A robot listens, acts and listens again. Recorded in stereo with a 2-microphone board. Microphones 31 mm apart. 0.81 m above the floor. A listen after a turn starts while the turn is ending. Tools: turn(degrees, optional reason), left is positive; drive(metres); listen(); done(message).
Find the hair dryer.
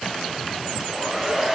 turn(degrees=-30)
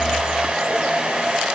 turn(degrees=-140, reason="So it is at 140° right.")
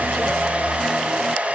turn(degrees=-50, reason="The hair dryer is now 50° right.")
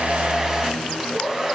turn(degrees=-10, reason="The hair dryer is now 10° right.")
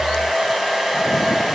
done("Facing the hair dryer.")